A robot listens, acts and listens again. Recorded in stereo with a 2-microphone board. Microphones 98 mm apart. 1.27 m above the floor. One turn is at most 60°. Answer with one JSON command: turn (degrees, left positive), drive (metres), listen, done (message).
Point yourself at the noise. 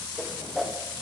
{"turn": 30}
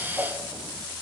{"turn": -25}
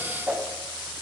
{"turn": -15}
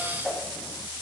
{"done": "Found it: a whoosh, straight ahead."}